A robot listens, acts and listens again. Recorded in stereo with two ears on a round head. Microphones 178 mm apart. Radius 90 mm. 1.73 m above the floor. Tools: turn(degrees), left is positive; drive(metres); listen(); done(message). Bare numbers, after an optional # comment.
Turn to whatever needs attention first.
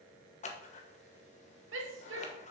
turn(-90)
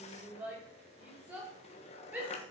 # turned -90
# So it is at 10° right.
turn(-10)
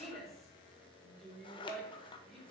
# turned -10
done("Found it: a shout, straight ahead.")